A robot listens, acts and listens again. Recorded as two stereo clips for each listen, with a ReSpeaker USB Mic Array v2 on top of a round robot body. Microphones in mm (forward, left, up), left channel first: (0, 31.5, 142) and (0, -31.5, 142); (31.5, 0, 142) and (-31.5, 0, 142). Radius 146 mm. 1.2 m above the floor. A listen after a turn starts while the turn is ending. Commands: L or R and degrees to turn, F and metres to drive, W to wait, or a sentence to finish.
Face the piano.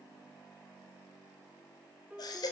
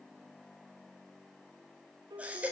R165
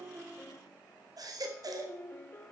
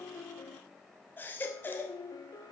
L25
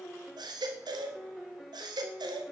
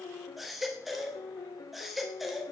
Facing the piano.